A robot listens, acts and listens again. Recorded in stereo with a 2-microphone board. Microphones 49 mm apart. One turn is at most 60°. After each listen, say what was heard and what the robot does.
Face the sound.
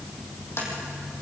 The tapping: about 60° left or 120° left. Turn 60° left.
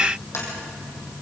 So it is at 65° left. Turn 60° left.
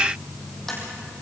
Found it: tapping, straight ahead, over 4 m away.